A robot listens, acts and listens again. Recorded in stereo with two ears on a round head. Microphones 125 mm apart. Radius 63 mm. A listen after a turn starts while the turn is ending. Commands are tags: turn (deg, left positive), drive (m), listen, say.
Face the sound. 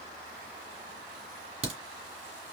<turn deg="-45"/>
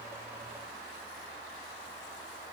<listen/>
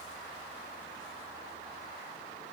<say>I heard a crack, but can't make it out now. It was about straight ahead or 90° right.</say>